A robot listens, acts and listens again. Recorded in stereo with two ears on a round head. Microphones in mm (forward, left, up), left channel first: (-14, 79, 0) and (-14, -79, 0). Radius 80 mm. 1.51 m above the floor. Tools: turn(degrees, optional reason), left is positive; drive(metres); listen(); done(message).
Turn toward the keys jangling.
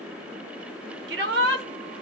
listen()
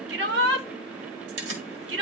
turn(degrees=-65, reason="The keys jangling: about 65° right or 115° right.")
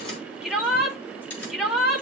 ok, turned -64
turn(degrees=10, reason="So it is at 10° left.")
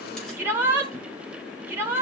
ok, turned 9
listen()
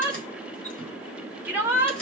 done("Facing the keys jangling, over 4 m away.")